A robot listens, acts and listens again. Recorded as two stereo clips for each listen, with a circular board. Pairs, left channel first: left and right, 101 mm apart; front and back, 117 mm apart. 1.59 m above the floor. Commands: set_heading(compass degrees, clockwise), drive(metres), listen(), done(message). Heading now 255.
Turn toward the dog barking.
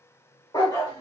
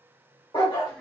set_heading(210)
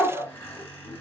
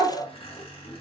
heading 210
done("Facing the dog barking.")